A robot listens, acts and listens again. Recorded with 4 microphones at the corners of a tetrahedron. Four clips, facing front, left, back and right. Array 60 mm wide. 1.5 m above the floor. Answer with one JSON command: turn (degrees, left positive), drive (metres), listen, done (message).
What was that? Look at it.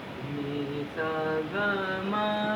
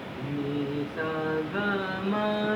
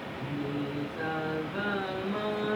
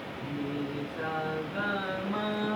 {"turn": 55}
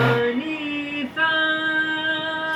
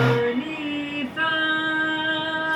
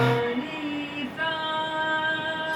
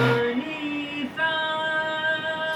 {"turn": 45}
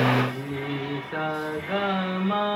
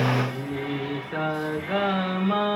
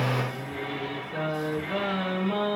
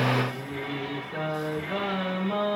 {"turn": 55}
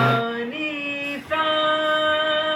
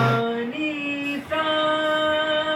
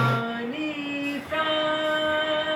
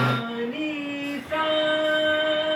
{"turn": 20}
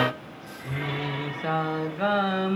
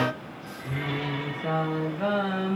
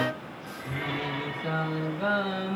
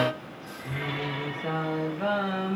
{"done": "Found it: singing, straight ahead, 2 to 4 m away."}